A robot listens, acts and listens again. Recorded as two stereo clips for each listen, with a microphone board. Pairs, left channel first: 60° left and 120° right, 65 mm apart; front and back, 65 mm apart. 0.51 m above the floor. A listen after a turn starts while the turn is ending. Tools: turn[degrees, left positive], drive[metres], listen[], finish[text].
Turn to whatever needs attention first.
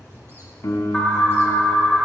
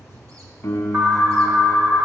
Thought: The alarm: 130° left.
Action: turn[130]
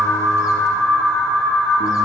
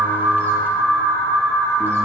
Thought: The alarm is now 15° right.
Action: turn[-15]
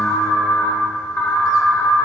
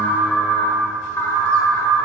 Action: finish[Found it: an alarm, straight ahead.]